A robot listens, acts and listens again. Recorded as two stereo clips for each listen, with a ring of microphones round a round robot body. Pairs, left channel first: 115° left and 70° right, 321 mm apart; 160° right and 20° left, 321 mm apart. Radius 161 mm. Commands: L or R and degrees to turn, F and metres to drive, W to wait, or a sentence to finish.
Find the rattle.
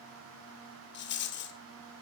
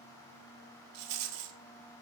L55
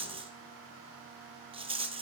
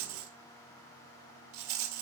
Facing the rattle, 1 to 2 m away.